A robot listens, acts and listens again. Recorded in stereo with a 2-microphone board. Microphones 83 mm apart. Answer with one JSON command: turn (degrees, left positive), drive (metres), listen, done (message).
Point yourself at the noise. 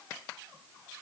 {"listen": true}
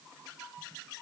{"listen": true}
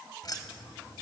{"turn": 55}
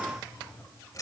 {"turn": 45}
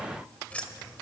{"turn": 10}
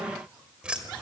{"turn": -15}
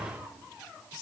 {"done": "Found it: keys jangling, straight ahead."}